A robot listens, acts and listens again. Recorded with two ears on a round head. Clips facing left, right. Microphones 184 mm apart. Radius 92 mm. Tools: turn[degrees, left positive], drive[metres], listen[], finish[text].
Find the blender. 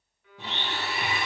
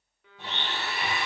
Thought: The blender: about 60° left or 120° left.
Action: turn[60]
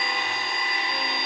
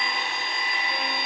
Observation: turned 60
Thought: So it is at 40° left.
Action: turn[40]
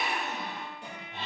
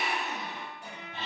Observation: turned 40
Action: finish[Found it: a blender, straight ahead, 1 to 2 m away.]